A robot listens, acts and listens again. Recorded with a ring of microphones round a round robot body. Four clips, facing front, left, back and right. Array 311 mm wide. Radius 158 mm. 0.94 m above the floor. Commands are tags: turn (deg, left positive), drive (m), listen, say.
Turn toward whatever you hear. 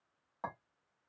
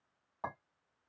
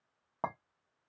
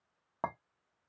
<turn deg="-135"/>
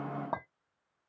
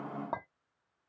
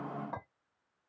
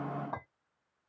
<turn deg="30"/>
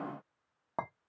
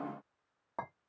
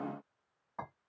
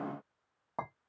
<say>Found it: a clink, straight ahead.</say>